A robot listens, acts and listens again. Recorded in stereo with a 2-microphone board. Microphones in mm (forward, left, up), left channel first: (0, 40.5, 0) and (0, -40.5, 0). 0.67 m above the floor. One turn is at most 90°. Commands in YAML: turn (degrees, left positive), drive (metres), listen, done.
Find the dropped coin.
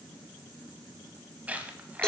turn: -20
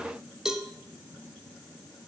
listen: true
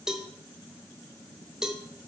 done: "I heard a dropped coin, but can't make it out now. It was about straight ahead or 140° right."